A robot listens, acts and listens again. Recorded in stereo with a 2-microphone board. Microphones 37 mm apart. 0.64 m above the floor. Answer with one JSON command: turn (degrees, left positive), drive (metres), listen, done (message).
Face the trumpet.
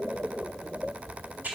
{"listen": true}
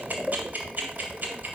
{"listen": true}
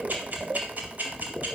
{"done": "I can't make out a trumpet to turn to."}